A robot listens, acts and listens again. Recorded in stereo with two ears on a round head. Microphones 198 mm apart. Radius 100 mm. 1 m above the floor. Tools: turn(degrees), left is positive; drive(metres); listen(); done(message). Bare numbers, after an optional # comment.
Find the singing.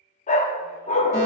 listen()
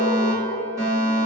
listen()
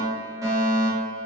done("I can't make out singing, only a fire alarm and a dog barking.")